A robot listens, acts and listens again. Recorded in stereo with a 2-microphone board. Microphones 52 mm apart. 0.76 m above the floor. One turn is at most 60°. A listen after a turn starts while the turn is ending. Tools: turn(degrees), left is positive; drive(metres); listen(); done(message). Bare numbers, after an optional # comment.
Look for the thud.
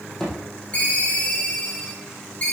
turn(30)
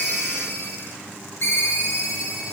listen()
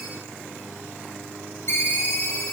done("I heard a thud, but can't make it out now. It was about 20° right or 140° left.")